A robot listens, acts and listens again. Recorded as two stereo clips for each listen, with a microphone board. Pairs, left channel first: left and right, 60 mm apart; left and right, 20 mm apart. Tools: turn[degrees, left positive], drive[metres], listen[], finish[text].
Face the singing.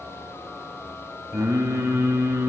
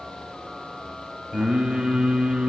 Action: turn[-90]
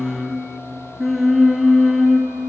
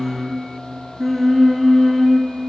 Action: finish[Found it: singing, straight ahead, 1 to 2 m away.]